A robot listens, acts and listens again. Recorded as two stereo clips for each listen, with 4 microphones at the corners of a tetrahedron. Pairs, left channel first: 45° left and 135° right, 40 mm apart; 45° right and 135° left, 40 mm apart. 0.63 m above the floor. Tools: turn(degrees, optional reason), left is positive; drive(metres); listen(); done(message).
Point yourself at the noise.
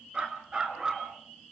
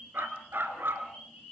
turn(degrees=155, reason="The dog barking: 155° left.")
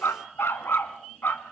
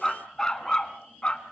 turn(degrees=15, reason="The dog barking is now 15° left.")
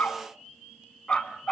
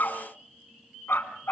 turn(degrees=-25, reason="The dog barking is now 25° right.")
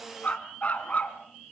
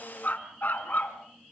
done("Facing the dog barking.")